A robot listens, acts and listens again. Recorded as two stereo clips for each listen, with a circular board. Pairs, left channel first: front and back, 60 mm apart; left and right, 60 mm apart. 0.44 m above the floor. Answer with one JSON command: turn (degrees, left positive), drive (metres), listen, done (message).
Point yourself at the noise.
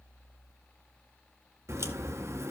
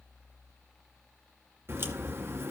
{"turn": -140}
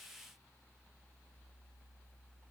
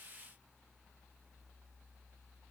{"done": "I heard a crack from this way, but can't make it out now."}